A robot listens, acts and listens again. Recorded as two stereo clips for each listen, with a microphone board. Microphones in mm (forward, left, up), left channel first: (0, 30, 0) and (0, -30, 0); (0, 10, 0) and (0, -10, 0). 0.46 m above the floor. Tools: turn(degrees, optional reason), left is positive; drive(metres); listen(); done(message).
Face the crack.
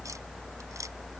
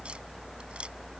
listen()
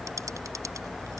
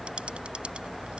listen()
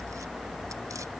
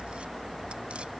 done("I can't make out a crack to turn to.")